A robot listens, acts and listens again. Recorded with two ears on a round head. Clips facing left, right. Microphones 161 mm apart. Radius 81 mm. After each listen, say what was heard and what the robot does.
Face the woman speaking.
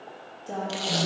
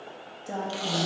The woman speaking: about 20° right or 160° right. Turn 20° right.
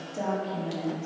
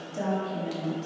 The woman speaking: about 20° right or 160° right. Turn 20° right.
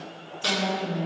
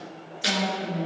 Turn 30° right.
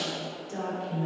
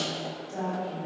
So it is at 25° left. Turn 25° left.
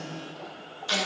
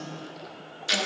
Keep listening.
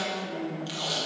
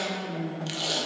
Facing the woman speaking.